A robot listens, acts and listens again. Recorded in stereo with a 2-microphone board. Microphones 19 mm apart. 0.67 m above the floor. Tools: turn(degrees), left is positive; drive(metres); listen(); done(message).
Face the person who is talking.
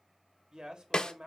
turn(degrees=-50)
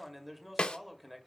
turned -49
done("Found it: a man speaking, straight ahead, 2 to 4 m away.")